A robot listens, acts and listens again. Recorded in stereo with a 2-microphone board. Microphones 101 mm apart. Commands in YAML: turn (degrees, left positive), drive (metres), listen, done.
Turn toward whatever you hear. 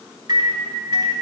turn: -40
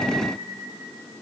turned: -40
listen: true
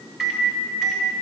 done: "Found it: a microwave, straight ahead."